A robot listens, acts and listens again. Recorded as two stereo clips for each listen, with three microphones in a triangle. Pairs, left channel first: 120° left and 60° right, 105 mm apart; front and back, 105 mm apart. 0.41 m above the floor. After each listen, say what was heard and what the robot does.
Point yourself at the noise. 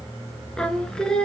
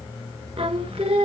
The singing: 160° right. Turn 160° right.
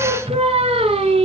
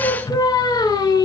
The singing is now 50° right. Turn 50° right.
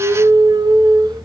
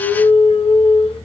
The singing is now 15° right. Turn 15° right.
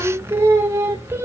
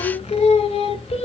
Facing the singing, under 1 m away.